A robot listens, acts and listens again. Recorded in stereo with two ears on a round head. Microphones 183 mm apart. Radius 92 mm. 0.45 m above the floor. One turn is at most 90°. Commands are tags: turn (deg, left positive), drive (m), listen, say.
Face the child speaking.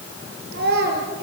<turn deg="-55"/>
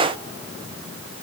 <listen/>
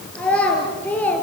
<turn deg="10"/>
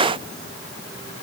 <listen/>
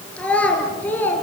<turn deg="10"/>
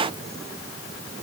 <listen/>
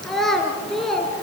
<say>Facing the child speaking, 2 to 4 m away.</say>